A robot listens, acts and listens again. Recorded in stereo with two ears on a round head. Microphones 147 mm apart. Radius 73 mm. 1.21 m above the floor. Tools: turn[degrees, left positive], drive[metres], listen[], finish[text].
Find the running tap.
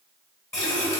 Thought: The running tap: about 15° left or 165° left.
Action: turn[15]
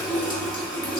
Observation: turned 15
Action: finish[Found it: a running tap, straight ahead, under 1 m away.]